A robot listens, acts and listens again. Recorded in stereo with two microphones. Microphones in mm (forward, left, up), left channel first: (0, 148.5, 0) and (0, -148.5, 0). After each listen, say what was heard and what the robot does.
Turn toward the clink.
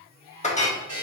The clink: about 25° left or 155° left. Turn 25° left.
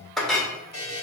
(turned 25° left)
Facing the clink, 1 to 2 m away.